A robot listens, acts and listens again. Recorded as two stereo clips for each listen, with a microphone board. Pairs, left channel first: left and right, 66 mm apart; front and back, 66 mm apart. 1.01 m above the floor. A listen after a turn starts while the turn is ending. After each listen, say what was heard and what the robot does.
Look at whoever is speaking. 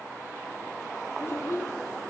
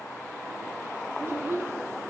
The child speaking: 135° left. Turn 135° left.
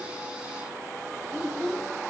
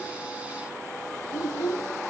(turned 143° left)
The child speaking is now 10° right. Turn 10° right.
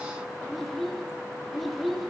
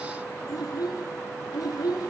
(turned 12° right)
Facing the child speaking.